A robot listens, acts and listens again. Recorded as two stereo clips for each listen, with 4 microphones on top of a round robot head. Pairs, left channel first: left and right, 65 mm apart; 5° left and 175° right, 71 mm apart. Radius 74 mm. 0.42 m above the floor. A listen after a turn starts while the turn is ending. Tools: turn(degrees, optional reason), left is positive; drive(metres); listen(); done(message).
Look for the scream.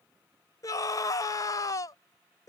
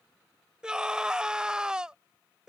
turn(degrees=110, reason="The scream: 110° left.")
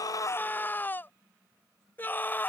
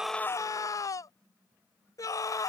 turn(degrees=35, reason="The scream is now 35° left.")
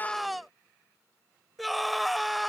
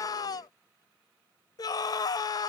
done("Found it: a scream, straight ahead.")